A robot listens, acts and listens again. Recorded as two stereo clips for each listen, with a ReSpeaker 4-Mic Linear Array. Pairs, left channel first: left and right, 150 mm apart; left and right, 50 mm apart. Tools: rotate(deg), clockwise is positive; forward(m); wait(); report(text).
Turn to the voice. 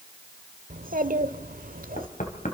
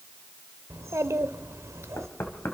rotate(70)
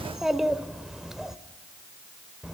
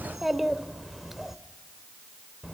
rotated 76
report("Found it: a child speaking, straight ahead.")